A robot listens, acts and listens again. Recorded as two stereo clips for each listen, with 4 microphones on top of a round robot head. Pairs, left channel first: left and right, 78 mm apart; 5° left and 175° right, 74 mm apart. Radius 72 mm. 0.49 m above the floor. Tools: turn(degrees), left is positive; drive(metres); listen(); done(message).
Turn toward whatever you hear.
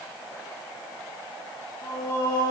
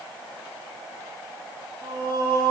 turn(degrees=150)
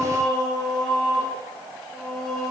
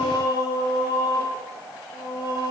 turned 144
done("Facing the singing.")